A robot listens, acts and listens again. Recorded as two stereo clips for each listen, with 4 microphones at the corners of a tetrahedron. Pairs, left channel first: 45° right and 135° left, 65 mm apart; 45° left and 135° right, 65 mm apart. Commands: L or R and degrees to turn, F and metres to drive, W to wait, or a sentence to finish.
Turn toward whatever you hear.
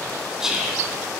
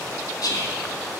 L55
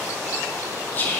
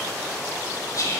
L15
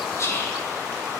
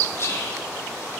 Facing the whispering.